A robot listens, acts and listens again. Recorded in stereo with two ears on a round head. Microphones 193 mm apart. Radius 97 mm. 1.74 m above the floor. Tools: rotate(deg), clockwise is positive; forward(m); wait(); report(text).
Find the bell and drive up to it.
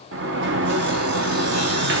wait()
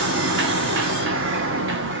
wait()
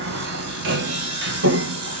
report("I can't make out a bell, only sawing and a sliding door.")